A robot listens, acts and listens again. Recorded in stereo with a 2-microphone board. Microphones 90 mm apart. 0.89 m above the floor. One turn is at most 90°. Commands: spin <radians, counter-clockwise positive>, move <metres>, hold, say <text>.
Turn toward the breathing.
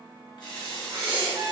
spin -1.13
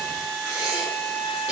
spin -0.35
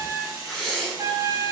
say Facing the breathing, 1 to 2 m away.